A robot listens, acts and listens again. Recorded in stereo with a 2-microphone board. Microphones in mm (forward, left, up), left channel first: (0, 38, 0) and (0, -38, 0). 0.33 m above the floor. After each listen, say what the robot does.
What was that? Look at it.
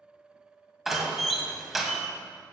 Turn 30° right.
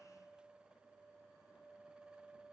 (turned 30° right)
Keep listening.
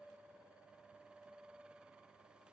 I heard a door slam, but can't make it out now. It was about 25° left or 145° right.